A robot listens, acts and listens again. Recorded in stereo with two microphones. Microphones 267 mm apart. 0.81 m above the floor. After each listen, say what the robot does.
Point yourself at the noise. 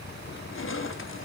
Turn 50° left.
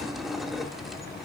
Facing the crushing.